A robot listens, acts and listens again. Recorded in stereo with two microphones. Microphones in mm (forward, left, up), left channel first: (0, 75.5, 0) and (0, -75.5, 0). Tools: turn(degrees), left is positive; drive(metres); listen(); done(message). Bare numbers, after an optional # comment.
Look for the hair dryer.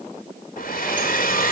# The hair dryer: about 65° left or 115° left.
turn(65)
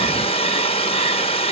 # So it is at 40° left.
turn(40)
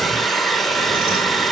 done("Facing the hair dryer.")